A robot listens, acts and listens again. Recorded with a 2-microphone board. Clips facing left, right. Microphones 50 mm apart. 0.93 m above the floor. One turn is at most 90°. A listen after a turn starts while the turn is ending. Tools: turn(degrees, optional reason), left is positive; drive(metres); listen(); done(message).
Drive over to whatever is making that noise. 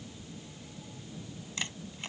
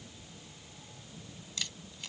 turn(degrees=30, reason="The camera shutter: about 30° left or 150° left.")
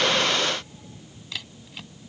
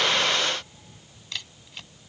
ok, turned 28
drive(metres=1.0)
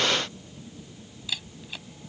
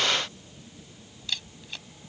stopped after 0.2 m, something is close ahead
done("Something is in my way. I am facing the camera shutter but have not reached it.")